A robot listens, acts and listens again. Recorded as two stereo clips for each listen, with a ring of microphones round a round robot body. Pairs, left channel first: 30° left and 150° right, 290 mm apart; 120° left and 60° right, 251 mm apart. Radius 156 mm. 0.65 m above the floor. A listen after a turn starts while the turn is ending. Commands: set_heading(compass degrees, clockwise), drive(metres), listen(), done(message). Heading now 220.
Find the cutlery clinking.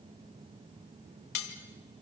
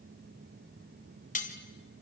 set_heading(160)
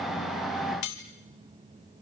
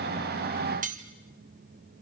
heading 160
done("Found it: cutlery clinking, straight ahead, 2 to 4 m away.")